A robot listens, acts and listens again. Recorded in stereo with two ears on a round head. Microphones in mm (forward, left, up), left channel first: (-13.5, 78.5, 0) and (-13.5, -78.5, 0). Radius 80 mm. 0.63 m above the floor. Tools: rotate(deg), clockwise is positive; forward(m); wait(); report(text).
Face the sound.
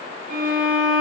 rotate(55)
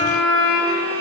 rotate(70)
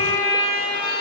rotate(-25)
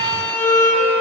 rotate(-15)
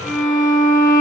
report("Facing the violin.")